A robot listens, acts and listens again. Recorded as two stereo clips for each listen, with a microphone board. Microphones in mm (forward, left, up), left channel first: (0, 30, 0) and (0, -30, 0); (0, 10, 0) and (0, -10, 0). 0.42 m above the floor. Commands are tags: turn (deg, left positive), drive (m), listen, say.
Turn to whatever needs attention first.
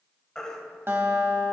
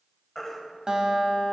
<turn deg="30"/>
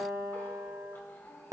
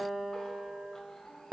<listen/>
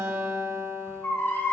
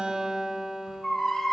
<turn deg="135"/>
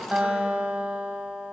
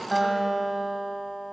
<listen/>
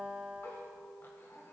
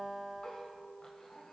<listen/>
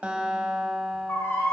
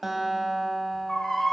<turn deg="55"/>
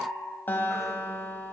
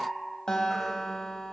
<listen/>
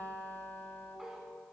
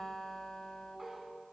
<listen/>
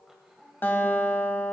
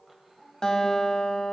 <say>Facing where the baby crying came from. I can't hear it now.</say>